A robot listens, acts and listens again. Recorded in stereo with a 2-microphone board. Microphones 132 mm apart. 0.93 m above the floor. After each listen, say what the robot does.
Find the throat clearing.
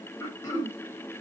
Turn 25° left.
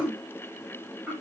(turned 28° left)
Found it: throat clearing, straight ahead, 1 to 2 m away.